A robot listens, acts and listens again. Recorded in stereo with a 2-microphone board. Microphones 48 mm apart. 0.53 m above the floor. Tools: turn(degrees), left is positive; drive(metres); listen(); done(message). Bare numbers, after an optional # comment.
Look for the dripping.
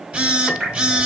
# The dripping: about 20° right or 160° right.
turn(-20)
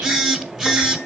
listen()
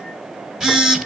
listen()
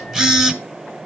done("I heard dripping, but can't make it out now. It was about straight ahead or 140° right.")